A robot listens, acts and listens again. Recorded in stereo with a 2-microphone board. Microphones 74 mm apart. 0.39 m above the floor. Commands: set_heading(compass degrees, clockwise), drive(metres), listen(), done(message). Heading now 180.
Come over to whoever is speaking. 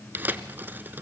listen()
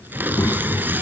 set_heading(125)
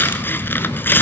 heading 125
set_heading(60)
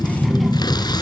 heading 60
drive(1.0)
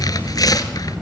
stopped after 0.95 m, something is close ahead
done("Arrived at the child speaking, straight ahead.")